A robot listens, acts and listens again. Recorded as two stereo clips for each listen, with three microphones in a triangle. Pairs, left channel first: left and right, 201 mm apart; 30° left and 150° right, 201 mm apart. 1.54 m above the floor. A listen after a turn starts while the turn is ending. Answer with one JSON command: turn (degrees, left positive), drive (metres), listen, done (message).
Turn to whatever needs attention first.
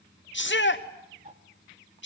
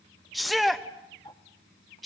{"turn": 120}
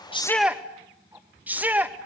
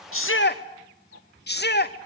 {"turn": -10}
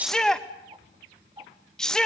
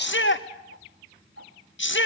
{"done": "Found it: a shout, straight ahead, 2 to 4 m away."}